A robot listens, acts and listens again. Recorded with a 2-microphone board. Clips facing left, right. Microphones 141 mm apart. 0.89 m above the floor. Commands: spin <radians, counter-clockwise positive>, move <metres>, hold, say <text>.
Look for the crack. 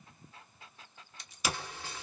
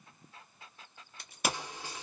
spin -0.96
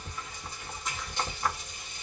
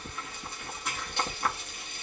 hold
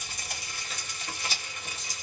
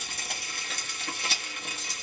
say I heard a crack, but can't make it out now. It was about straight ahead or 70° right.